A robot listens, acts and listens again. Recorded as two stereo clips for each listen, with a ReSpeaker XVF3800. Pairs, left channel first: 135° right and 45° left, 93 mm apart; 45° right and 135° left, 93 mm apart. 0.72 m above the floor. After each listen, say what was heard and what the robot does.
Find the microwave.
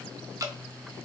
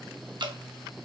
Keep listening.
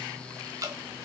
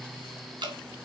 Keep listening.
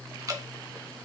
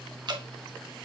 I can't make out a microwave to turn to.